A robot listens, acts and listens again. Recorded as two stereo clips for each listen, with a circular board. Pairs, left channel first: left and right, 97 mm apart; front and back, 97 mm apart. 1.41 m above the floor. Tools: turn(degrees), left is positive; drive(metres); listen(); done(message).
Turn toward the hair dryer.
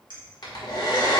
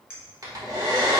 turn(degrees=130)
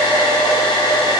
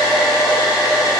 turn(degrees=55)
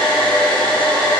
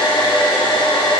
turn(degrees=10)
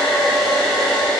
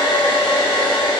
done("Found it: a hair dryer, straight ahead.")